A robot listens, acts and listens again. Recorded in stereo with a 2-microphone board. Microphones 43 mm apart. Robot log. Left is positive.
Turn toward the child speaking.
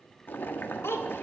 cmd yaw +90
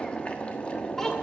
cmd idle
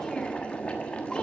cmd idle
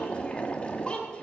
note: The child speaking is now 25° left.
cmd yaw +25
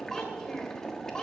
note: The child speaking is now 15° left.
cmd yaw +15
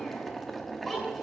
end: Found it: a child speaking, straight ahead.